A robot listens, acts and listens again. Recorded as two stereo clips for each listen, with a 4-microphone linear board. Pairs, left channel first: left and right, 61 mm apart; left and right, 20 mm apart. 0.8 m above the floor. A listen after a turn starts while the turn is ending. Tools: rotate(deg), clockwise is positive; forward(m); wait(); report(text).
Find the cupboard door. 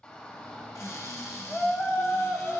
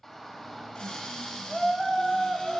rotate(-55)
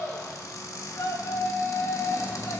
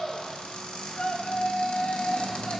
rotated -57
rotate(-65)
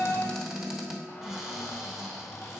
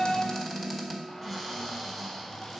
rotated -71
report("Facing the cupboard door, 1 to 2 m away.")